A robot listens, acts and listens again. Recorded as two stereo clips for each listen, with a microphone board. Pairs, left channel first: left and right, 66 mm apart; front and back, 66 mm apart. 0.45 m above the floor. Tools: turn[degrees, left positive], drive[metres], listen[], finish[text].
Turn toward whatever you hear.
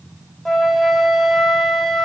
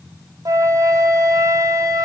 Thought: The flute: 175° left.
Action: turn[175]
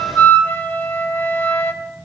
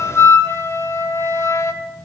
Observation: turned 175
Thought: The flute is now 35° left.
Action: turn[35]
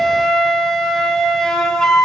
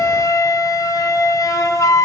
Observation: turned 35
Thought: The flute is now 10° left.
Action: turn[10]
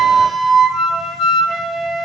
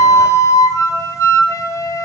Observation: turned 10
Action: finish[Facing the flute.]